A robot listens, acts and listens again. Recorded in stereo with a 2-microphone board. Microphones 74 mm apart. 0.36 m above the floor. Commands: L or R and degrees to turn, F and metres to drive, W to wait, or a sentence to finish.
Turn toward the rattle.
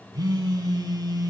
W
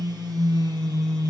W
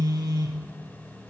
I can't make out a rattle, only a phone buzzing.